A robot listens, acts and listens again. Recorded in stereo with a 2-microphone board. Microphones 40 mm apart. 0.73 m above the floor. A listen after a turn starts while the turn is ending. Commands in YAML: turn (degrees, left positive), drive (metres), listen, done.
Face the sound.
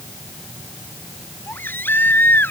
turn: 60
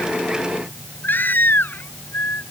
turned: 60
turn: 55
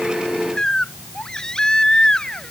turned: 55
turn: 15
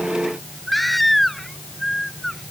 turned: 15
done: "Found it: a baby crying, straight ahead."